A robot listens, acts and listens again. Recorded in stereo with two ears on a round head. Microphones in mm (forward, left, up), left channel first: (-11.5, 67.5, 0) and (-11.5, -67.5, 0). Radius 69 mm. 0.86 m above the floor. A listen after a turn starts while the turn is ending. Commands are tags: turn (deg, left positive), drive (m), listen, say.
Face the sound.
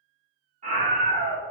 <turn deg="-50"/>
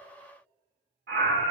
<turn deg="-75"/>
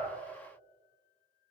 <listen/>
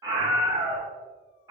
<turn deg="-20"/>
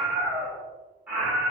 <turn deg="-10"/>
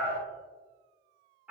<say>Facing the scream.</say>